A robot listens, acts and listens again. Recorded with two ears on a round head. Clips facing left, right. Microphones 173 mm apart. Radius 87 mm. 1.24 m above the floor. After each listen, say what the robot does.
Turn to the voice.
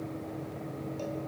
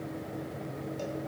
Keep listening.
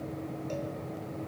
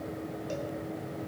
Keep listening.
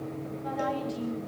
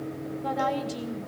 Turn 65° right.
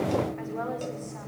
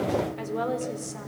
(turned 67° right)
Turn 45° right.
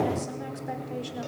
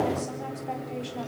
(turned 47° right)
Keep listening.
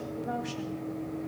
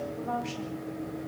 Turn 15° left.
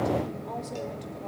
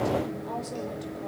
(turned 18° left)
Keep listening.
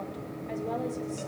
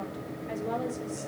Keep listening.
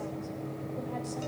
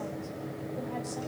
Facing where the woman speaking came from. I can't hear it now.